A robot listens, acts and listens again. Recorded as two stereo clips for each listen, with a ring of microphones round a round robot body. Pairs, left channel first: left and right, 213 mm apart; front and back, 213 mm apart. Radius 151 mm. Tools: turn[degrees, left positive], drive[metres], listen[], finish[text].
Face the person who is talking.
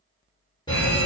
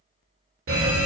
Action: listen[]
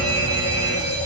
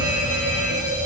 Action: listen[]
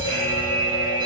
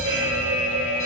Action: finish[I can't make out anyone speaking to turn to.]